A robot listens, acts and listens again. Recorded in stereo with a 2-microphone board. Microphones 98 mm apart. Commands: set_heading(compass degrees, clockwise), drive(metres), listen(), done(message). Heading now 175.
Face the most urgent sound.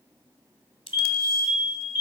set_heading(195)
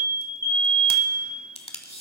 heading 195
set_heading(330)
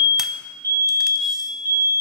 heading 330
set_heading(5)
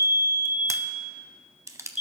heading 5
set_heading(15)
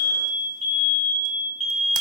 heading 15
done("Facing the fire alarm.")